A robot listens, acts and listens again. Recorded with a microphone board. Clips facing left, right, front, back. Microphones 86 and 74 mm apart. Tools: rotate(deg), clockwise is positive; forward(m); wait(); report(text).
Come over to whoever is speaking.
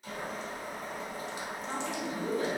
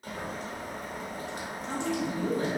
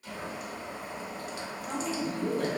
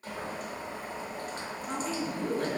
rotate(25)
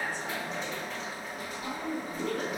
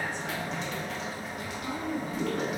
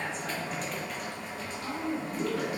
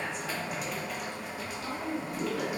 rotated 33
forward(1.0)
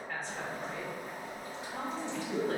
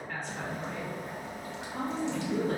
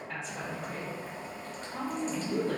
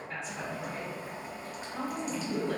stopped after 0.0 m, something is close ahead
report("Something is in my way. I am facing the woman speaking but have not reached it.")